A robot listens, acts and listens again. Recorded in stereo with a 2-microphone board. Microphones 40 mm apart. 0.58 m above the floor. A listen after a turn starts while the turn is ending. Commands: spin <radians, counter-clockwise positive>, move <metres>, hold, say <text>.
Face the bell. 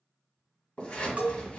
spin -0.79
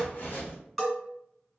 say Facing the bell.